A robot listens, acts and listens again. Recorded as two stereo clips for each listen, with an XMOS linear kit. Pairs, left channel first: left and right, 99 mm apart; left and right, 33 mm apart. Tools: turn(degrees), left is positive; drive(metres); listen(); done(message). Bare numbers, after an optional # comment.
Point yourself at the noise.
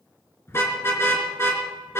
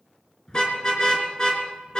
# The car horn: about 25° left or 155° left.
turn(25)
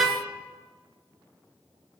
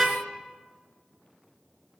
done("Facing the car horn.")